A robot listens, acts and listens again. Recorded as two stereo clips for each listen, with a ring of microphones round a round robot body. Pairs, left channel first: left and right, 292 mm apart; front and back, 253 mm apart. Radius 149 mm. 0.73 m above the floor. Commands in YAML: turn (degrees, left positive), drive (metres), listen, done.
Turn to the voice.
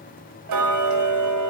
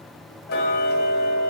listen: true
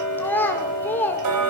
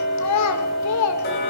done: "Facing the child speaking, 2 to 4 m away."